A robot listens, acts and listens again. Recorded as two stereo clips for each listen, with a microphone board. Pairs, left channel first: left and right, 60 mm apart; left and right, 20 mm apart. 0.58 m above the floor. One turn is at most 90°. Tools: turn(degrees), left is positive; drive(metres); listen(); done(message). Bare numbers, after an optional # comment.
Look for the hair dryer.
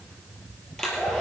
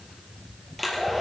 turn(30)
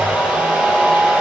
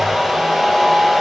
# So it is at 20° right.
turn(-20)
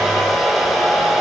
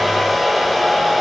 done("Found it: a hair dryer, straight ahead, 2 to 4 m away.")